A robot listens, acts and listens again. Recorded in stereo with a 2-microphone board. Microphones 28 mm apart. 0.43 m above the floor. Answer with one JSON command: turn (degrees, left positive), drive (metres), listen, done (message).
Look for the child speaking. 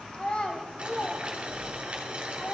{"turn": 60}
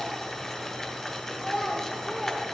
{"done": "Facing the child speaking, 1 to 2 m away."}